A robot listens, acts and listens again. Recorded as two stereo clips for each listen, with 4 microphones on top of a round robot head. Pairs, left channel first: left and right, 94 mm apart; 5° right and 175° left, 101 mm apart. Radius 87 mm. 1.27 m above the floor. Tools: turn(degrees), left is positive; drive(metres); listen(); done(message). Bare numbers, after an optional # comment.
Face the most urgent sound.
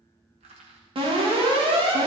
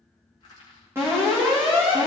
# The alarm: 115° right.
turn(-115)
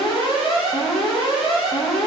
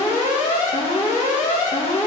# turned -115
done("Found it: an alarm, straight ahead, 2 to 4 m away.")